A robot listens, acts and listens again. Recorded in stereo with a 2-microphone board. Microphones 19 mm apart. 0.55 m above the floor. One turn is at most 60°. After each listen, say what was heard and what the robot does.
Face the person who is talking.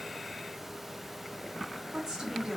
The woman speaking: about 25° right or 155° right. Turn 25° right.
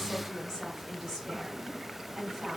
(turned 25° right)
Facing the woman speaking, 2 to 4 m away.